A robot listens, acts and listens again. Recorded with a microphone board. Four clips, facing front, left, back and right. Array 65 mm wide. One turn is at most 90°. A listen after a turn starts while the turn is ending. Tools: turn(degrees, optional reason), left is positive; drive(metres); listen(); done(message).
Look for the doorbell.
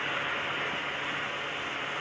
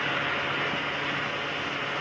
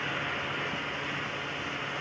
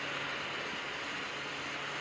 listen()
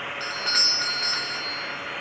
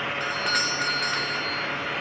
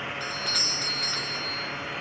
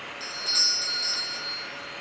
turn(degrees=55, reason="The doorbell: 55° left.")
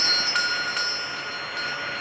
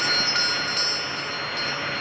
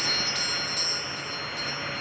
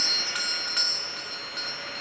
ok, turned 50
done("Found it: a doorbell, straight ahead, 1 to 2 m away.")